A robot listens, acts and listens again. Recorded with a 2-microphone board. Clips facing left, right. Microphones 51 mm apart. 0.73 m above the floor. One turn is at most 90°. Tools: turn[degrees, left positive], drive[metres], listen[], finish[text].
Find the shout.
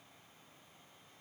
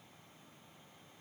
Action: listen[]
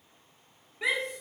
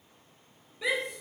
Thought: The shout: about 55° left or 125° left.
Action: turn[55]
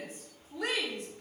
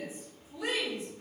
Thought: So it is at 60° left.
Action: turn[60]
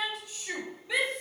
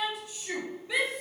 Action: finish[Facing the shout, 2 to 4 m away.]